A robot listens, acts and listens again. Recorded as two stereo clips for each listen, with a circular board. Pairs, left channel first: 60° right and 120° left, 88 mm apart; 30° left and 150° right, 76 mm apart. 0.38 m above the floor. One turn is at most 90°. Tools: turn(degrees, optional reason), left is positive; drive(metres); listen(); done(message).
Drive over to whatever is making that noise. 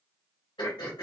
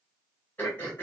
turn(degrees=-35, reason="The throat clearing: 35° right.")
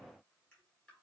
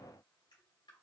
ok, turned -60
turn(degrees=25, reason="Nothing new. It was at 25° left.")
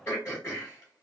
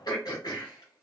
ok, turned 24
drive(metres=1.0)
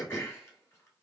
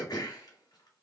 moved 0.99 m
drive(metres=1.0)
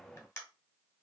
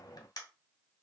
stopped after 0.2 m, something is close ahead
done("Arrived at the throat clearing, straight ahead.")